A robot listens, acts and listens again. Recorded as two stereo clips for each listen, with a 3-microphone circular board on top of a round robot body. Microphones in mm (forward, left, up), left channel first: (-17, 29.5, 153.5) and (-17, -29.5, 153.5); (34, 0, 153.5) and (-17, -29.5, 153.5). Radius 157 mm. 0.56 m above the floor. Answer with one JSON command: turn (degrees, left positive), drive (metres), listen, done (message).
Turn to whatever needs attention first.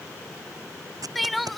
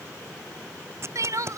{"turn": 180}
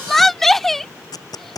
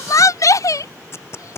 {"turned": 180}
{"done": "Found it: crying, straight ahead."}